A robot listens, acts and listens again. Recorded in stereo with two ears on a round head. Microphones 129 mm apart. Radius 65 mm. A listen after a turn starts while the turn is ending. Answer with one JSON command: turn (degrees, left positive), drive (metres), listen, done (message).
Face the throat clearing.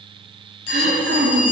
{"turn": -90}
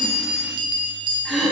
{"done": "Facing the throat clearing."}